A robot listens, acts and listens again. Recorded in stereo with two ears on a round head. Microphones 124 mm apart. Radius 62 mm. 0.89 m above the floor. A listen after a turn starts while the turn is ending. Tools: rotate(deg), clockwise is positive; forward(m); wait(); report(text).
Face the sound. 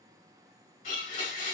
rotate(-65)
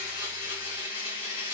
rotate(-45)
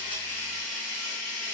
report("Facing the blender.")